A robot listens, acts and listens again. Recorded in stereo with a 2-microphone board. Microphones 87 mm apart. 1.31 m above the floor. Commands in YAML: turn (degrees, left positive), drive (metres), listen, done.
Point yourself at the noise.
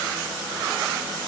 listen: true
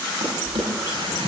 turn: -65
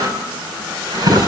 turn: -45
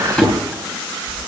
turn: 10
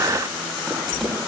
done: "Found it: a drawer, straight ahead, over 4 m away."